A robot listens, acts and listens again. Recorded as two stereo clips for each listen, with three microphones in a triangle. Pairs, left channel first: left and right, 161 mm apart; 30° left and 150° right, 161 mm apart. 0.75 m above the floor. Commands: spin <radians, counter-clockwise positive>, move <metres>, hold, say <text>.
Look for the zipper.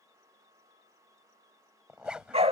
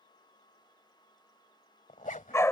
say Found it: a zipper, straight ahead.